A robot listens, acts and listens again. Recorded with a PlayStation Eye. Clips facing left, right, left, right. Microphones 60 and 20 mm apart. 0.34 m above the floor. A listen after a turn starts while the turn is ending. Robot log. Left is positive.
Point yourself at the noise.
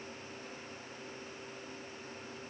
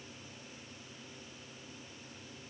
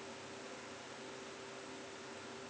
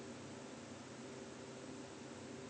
cmd idle
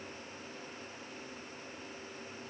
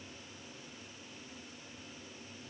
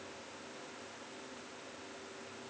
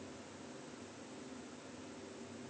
cmd idle
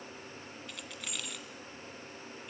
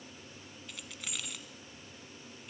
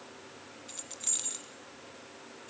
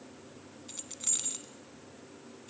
cmd yaw +30
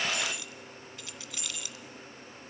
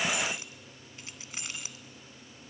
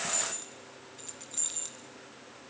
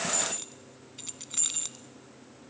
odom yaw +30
note: So it is at 30° right.
cmd yaw -30
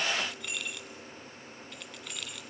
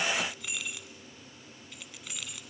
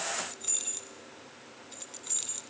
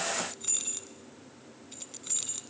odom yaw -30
end: Facing the keys jangling, 1 to 2 m away.